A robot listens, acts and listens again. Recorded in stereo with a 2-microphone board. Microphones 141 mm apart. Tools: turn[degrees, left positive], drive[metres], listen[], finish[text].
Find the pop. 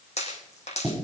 Thought: The pop: about 50° left or 130° left.
Action: turn[50]
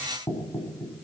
Action: listen[]
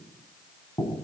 Action: finish[I heard a pop, but can't make it out now. It was about straight ahead or 80° left.]